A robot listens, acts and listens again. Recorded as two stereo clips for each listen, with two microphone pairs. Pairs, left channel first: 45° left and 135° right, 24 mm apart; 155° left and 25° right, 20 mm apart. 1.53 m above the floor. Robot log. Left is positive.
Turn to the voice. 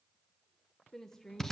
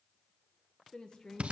note: The woman speaking: 115° left.
cmd yaw +115
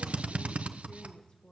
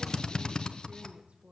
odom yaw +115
note: The woman speaking is now 10° right.
cmd yaw -10
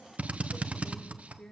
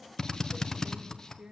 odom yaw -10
end: Found it: a woman speaking, straight ahead, 1 to 2 m away.